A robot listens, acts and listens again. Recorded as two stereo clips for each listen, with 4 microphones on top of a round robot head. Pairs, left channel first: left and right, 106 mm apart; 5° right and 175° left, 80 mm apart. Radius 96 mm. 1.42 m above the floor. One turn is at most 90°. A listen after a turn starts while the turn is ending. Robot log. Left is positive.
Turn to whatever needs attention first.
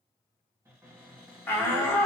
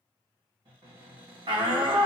note: The shout: 160° left.
cmd yaw +90
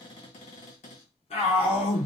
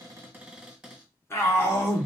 note: The shout is now 50° left.
cmd yaw +50
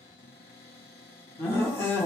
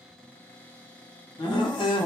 note: The shout is now 20° left.
cmd yaw +20
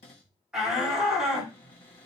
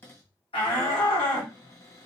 end: Found it: a shout, straight ahead, 1 to 2 m away.